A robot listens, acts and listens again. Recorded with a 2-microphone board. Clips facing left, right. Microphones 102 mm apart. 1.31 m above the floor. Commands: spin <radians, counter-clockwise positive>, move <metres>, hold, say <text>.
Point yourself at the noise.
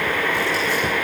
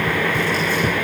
hold
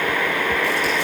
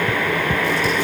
hold
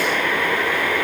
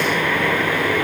say I can't make out anything.